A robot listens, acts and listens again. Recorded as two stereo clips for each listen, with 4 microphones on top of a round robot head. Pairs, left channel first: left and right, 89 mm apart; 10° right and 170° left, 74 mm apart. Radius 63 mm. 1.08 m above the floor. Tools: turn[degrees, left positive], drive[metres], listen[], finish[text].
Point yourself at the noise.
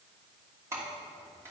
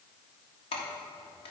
Thought: The keys jangling: 20° right.
Action: turn[-20]
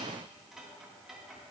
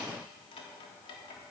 Action: finish[Facing the keys jangling.]